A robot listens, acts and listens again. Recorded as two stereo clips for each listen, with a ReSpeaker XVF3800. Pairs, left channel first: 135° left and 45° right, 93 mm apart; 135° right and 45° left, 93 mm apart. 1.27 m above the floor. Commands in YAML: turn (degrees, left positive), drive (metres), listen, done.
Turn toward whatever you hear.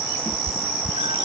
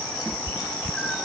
turn: -50
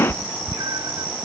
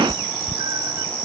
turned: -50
done: "Facing the cat meowing."